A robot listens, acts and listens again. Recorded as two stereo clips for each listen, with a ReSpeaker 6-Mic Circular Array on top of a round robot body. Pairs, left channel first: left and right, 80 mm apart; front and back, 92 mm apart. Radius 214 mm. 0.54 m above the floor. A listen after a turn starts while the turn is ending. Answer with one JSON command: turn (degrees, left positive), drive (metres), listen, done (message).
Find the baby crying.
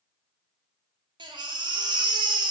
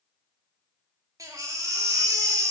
{"turn": -125}
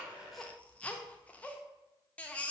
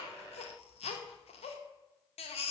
{"turn": 15}
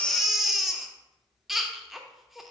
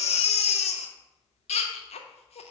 {"done": "Found it: a baby crying, straight ahead, under 1 m away."}